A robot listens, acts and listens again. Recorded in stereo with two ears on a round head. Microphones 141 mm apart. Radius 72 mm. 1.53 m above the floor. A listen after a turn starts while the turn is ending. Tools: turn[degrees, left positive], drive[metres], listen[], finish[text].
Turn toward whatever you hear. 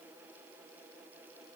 Action: listen[]
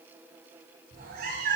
Thought: The cat meowing: about 65° right or 115° right.
Action: turn[-65]
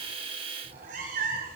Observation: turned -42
Thought: So it is at 65° right.
Action: turn[-65]
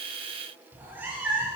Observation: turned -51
Thought: The cat meowing is now 15° right.
Action: turn[-15]
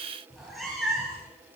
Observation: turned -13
Action: finish[Facing the cat meowing.]